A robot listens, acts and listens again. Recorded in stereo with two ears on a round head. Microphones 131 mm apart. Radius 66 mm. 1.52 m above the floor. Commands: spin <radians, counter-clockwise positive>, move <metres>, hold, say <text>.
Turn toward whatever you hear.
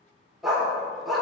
spin 0.52
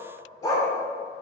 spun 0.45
spin 2.71
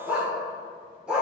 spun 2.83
say Found it: a dog barking, straight ahead.